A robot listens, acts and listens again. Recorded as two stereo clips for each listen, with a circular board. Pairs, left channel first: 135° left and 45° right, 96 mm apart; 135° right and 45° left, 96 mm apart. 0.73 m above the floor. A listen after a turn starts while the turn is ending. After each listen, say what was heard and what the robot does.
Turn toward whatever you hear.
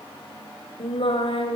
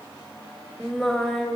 The singing: 140° left. Turn 140° left.
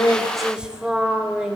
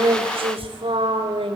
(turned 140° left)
The singing is now 35° left. Turn 35° left.
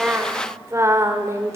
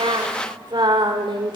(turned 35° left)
The singing is now 15° left. Turn 15° left.
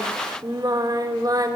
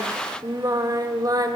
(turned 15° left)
Facing the singing.